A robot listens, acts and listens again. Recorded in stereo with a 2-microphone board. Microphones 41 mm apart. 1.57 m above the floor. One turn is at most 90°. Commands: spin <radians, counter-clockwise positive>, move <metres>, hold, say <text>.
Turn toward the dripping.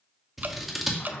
spin -0.96
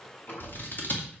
hold
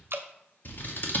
spin -1.22
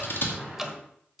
say Facing the dripping, 1 to 2 m away.